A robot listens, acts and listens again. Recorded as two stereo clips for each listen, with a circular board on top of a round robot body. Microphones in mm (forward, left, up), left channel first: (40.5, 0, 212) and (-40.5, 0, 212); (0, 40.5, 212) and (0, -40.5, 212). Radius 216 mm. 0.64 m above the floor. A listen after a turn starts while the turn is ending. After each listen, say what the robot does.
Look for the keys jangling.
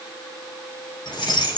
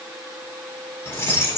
Turn 30° left.
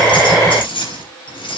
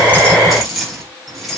Facing the keys jangling.